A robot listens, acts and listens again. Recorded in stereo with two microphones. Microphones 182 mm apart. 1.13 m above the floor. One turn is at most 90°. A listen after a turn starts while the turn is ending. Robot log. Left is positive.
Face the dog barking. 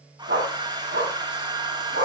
cmd yaw -90
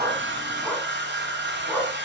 end: Facing the dog barking, over 4 m away.